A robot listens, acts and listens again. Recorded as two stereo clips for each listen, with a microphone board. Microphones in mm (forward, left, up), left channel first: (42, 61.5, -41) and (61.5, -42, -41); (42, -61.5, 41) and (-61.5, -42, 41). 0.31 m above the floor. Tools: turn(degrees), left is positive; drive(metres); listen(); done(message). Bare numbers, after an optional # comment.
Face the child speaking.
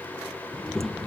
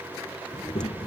# The child speaking: 15° left.
turn(15)
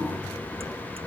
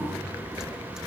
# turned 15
listen()
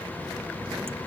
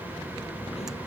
done("Found it: a child speaking, straight ahead.")